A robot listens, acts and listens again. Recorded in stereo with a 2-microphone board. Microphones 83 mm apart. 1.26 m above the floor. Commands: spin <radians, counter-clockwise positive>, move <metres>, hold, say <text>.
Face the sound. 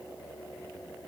hold
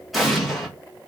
spin 0.52
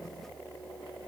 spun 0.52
hold
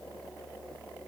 say I heard an explosion, but can't make it out now. It was about 30° right or 150° left.